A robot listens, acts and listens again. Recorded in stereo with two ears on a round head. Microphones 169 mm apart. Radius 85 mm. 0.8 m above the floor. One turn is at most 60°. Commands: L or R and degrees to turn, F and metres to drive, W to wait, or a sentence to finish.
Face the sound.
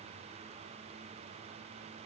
W
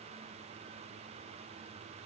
W
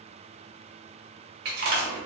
R55
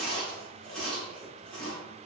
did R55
Facing the chewing, 1 to 2 m away.